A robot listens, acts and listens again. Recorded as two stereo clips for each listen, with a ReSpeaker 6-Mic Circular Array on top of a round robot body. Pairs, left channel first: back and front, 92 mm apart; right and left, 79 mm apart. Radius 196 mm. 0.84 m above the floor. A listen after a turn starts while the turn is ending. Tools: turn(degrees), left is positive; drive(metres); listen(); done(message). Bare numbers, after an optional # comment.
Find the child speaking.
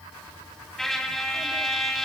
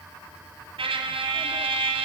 listen()
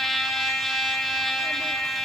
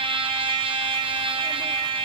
listen()
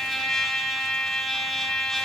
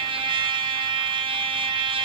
done("I can't make out a child speaking to turn to.")